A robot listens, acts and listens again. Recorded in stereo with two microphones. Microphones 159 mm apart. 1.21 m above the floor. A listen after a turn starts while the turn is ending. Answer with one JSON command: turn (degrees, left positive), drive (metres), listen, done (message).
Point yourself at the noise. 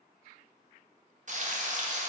{"turn": -50}
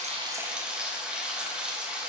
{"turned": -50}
{"done": "Found it: frying, straight ahead."}